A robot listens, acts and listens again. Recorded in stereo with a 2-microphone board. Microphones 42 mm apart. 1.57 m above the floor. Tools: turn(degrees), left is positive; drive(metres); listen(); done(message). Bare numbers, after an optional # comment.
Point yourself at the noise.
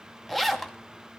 turn(30)
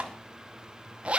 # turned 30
# So it is at 25° right.
turn(-25)
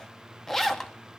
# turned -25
# The zipper is now 10° left.
turn(10)
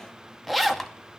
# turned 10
done("Facing the zipper.")